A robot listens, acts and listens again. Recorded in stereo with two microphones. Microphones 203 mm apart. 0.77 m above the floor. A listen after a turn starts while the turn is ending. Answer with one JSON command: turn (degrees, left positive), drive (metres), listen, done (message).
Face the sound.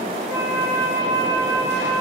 {"turn": -30}
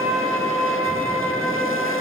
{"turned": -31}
{"turn": 15}
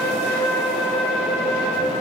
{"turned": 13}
{"done": "Facing the flute."}